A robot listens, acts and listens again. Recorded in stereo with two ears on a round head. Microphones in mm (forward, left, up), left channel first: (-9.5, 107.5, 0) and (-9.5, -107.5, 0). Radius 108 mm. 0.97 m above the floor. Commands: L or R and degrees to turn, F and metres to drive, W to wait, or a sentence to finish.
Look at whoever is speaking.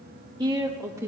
R30
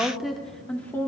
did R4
L30
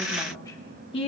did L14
L25
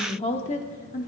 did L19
L35
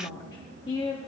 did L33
L25
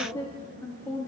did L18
L30
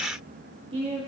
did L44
R30
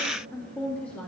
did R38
Found it: a woman speaking, straight ahead.